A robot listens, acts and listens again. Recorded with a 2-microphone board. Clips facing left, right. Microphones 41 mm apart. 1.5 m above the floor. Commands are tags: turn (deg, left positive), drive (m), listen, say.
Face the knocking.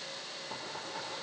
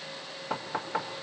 <turn deg="-75"/>
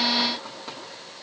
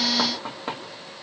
<turn deg="-35"/>
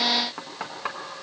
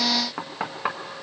<turn deg="-15"/>
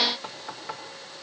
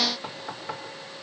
<say>Facing the knocking, 1 to 2 m away.</say>